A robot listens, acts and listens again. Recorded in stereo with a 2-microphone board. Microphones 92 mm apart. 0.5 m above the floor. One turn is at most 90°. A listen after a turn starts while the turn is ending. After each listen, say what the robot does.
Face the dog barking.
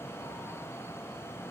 Keep listening.
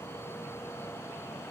Keep listening.
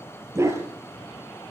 Turn 30° right.
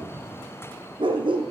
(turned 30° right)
Turn 90° right.
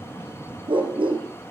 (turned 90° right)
Turn 65° right.
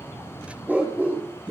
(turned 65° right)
Turn 15° right.
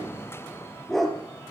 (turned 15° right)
Facing the dog barking.